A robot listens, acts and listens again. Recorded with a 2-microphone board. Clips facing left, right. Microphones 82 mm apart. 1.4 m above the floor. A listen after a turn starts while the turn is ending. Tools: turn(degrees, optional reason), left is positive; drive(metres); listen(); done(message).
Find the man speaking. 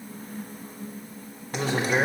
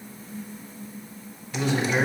turn(degrees=35, reason="The man speaking: about 35° left or 145° left.")
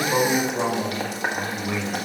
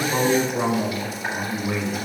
turn(degrees=-10, reason="So it is at 10° right.")
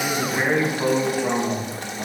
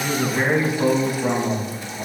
turn(degrees=-10, reason="The man speaking is now 10° right.")
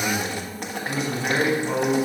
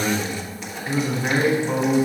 done("Found it: a man speaking, straight ahead.")